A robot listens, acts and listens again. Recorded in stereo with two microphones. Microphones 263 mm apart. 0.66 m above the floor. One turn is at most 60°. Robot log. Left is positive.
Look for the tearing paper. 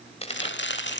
note: The tearing paper: about 25° left or 155° left.
cmd yaw +25
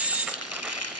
cmd idle
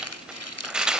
end: Found it: tearing paper, straight ahead.